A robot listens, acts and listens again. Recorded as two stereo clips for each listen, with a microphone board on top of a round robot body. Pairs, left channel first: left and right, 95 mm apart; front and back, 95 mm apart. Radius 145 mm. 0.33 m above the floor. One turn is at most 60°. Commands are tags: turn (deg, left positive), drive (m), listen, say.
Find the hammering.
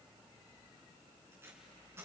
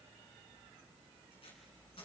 <listen/>
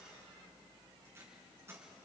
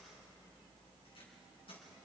<listen/>
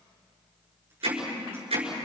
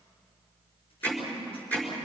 <turn deg="-60"/>
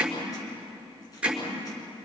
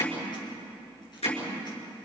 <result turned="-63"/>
<turn deg="-10"/>
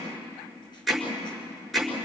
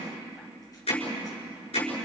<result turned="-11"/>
<say>Found it: hammering, straight ahead, over 4 m away.</say>